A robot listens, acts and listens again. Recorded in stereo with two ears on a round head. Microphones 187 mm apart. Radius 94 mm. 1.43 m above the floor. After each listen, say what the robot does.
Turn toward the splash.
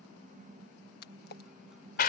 Turn 50° left.
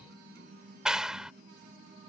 Keep listening.
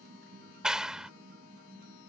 I heard a splash, but can't make it out now. It was about straight ahead or 80° left.